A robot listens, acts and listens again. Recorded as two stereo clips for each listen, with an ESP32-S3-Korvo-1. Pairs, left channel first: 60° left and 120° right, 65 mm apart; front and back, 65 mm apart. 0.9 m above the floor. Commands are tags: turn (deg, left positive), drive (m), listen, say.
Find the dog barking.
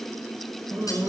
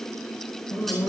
<turn deg="-75"/>
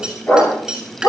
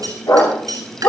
<say>Found it: a dog barking, straight ahead, over 4 m away.</say>